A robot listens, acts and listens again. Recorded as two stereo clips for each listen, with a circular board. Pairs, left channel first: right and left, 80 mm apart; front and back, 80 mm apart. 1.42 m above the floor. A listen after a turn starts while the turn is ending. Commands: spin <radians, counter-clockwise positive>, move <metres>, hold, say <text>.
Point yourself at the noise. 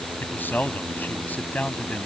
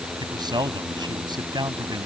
spin -2.79
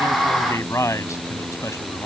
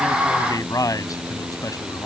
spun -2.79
spin -0.79
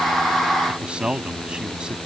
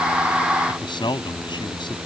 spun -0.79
spin 0.17
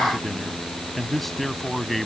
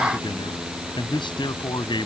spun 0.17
say Facing the man speaking.